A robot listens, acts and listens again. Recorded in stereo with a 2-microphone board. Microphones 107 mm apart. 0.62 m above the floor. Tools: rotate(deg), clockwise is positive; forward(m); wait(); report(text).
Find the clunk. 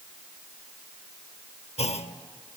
rotate(-75)
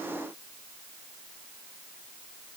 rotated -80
wait()
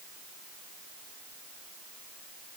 report("I heard a clunk, but can't make it out now. It was about 5° right or 25° left.")